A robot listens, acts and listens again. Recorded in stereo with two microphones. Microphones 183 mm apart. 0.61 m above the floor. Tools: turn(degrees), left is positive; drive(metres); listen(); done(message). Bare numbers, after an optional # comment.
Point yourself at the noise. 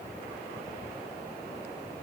listen()
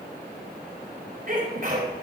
# The sneeze: about 55° right or 125° right.
turn(-55)
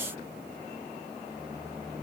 listen()
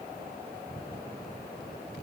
done("I heard a sneeze, but can't make it out now. It was about straight ahead or 70° right.")